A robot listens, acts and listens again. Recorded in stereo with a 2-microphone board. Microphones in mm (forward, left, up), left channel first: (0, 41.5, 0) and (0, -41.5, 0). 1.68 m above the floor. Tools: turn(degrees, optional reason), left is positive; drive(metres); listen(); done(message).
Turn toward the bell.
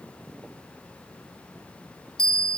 turn(degrees=30)
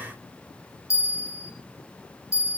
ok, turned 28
turn(degrees=145, reason="So it is at 145° left.")
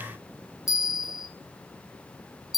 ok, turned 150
done("Facing the bell.")